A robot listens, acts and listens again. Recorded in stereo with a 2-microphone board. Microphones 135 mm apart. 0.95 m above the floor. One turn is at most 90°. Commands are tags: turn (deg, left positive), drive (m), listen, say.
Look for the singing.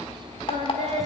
<turn deg="-55"/>
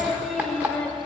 <turn deg="10"/>
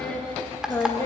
<turn deg="20"/>
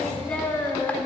<turn deg="20"/>
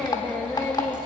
<turn deg="10"/>
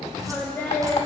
<turn deg="10"/>
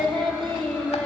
<say>Facing the singing, 2 to 4 m away.</say>